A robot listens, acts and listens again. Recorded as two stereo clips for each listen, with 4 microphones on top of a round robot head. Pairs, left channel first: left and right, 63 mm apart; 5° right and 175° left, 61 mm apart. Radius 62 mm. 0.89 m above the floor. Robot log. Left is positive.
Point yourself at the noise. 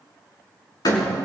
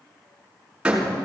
note: The door slam: 100° left.
cmd yaw +100
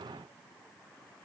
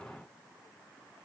end: I heard a door slam from this way, but can't make it out now.